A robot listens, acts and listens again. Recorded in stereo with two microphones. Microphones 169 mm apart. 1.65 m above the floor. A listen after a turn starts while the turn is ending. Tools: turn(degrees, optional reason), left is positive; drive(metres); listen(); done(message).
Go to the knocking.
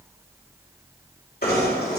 turn(degrees=65, reason="The knocking: about 65° left or 115° left.")
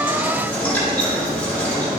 turn(degrees=10, reason="So it is at 10° left.")
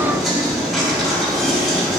drive(metres=1.0)
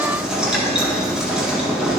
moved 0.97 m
drive(metres=1.0)
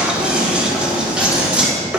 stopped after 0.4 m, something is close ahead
turn(degrees=-10, reason="The knocking is now 10° right.")
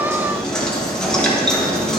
done("Arrived at the knocking, straight ahead.")